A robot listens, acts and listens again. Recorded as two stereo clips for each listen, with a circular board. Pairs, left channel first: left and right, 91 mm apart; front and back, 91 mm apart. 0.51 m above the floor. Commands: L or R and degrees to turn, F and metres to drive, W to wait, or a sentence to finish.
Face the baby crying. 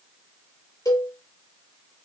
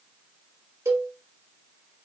W
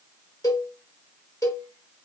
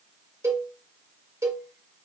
W
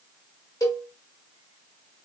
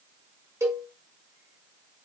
I can't make out a baby crying to turn to.